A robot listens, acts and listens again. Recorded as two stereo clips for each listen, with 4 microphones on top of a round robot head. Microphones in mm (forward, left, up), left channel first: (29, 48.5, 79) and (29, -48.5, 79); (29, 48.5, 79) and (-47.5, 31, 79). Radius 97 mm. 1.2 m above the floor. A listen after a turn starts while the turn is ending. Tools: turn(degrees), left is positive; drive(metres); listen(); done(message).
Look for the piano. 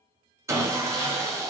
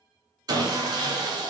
listen()
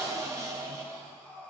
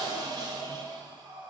listen()
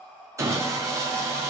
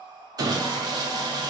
done("I can't make out a piano, only sawing and breathing.")